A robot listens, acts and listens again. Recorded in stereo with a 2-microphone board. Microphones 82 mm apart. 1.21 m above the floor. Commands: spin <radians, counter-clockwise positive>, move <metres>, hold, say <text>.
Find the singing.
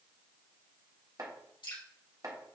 hold
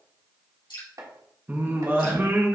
spin -0.44
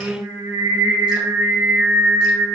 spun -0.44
spin -2.27
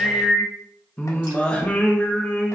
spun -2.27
spin 0.26
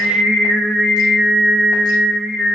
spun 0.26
say Found it: singing, straight ahead, 1 to 2 m away.